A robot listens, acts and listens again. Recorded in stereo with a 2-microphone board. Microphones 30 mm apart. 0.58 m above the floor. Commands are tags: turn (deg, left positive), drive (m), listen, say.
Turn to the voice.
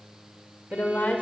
<turn deg="65"/>
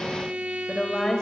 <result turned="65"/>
<turn deg="25"/>
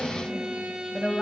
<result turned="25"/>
<say>Found it: a woman speaking, straight ahead, 2 to 4 m away.</say>